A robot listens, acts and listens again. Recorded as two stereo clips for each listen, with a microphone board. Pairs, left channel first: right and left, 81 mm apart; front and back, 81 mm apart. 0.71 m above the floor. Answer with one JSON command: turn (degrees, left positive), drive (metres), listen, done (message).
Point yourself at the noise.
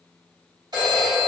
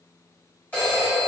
{"turn": 60}
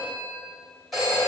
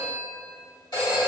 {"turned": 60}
{"done": "Found it: a phone ringing, straight ahead, 1 to 2 m away."}